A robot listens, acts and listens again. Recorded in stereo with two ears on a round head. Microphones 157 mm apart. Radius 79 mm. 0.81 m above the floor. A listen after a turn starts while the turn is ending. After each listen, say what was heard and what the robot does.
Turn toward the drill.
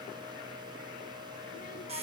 Keep listening.
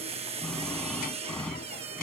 Turn 30° left.
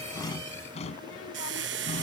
So it is at 145° left. Turn 145° left.
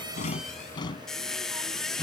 The drill is now 25° left. Turn 25° left.
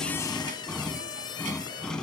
Found it: a drill, straight ahead.